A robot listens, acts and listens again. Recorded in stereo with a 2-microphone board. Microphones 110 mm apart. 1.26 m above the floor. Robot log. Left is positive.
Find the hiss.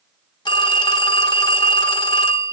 cmd idle
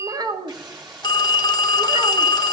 note: The hiss: about 45° right or 135° right.
cmd yaw -45
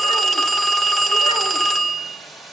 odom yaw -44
end: Found it: a hiss, straight ahead.